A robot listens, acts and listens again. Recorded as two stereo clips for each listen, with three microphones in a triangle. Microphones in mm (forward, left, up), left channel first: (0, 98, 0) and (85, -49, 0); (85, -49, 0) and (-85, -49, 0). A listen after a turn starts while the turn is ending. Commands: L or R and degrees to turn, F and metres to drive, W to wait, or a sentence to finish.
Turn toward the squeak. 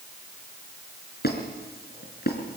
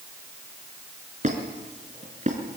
L135
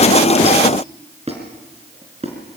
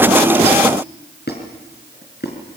R10
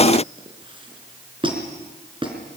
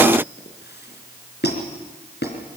Found it: a squeak, straight ahead.